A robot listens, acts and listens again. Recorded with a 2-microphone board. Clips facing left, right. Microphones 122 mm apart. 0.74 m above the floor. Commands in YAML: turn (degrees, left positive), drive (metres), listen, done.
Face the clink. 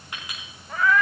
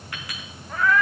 turn: 20
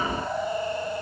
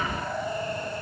listen: true
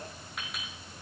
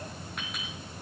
done: "Facing the clink, over 4 m away."